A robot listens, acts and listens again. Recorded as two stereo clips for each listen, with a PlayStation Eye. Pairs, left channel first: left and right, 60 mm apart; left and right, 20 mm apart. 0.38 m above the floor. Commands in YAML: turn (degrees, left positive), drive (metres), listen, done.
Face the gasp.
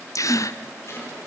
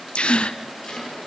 turn: 70
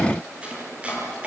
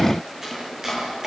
listen: true
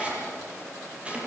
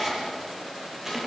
done: "I heard a gasp, but can't make it out now. It was about straight ahead or 40° left."